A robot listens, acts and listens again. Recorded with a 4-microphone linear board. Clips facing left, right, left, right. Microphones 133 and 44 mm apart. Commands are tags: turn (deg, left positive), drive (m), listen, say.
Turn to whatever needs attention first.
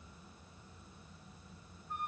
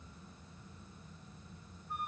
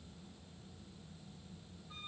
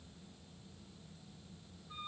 <listen/>
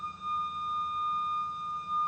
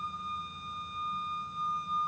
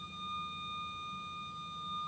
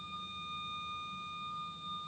<listen/>
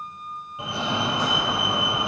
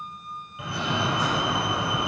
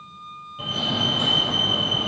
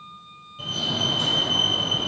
<turn deg="25"/>
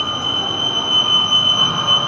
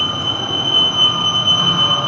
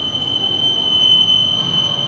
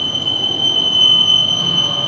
<say>Facing the fire alarm, 1 to 2 m away.</say>